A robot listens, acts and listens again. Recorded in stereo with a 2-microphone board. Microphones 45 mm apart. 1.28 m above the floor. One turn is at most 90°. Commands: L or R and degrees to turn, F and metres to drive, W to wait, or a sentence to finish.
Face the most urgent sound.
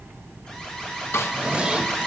L30
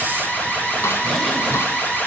L90
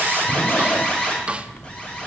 L30
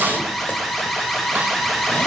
L10
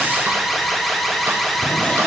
Facing the alarm, over 4 m away.